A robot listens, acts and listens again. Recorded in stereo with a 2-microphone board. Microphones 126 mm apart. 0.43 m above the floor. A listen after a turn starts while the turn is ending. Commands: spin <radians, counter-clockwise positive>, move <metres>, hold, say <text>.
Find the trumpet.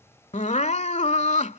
hold
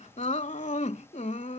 hold
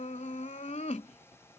say I can't make out a trumpet to turn to.